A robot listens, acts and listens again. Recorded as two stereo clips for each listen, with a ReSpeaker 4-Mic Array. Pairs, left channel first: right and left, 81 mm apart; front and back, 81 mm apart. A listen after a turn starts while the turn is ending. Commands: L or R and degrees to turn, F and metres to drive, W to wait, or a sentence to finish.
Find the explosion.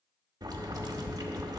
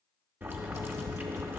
W
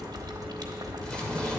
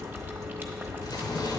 R15
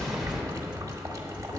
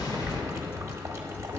Facing the explosion.